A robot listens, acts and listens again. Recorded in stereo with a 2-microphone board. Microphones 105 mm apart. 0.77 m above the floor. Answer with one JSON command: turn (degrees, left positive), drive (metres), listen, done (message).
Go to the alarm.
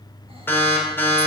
{"turn": 20}
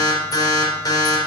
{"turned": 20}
{"turn": 135}
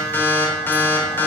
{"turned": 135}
{"turn": 20}
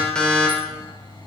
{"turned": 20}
{"turn": 10}
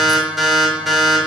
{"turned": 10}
{"drive": 1.0}
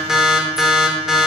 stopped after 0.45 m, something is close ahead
{"done": "Something is in my way. I am facing the alarm but have not reached it."}